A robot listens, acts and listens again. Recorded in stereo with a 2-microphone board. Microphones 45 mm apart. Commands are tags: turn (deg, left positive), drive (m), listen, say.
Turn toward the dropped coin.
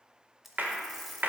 <turn deg="30"/>
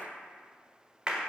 <listen/>
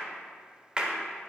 <say>I heard a dropped coin, but can't make it out now. It was about 30° right or 150° left.</say>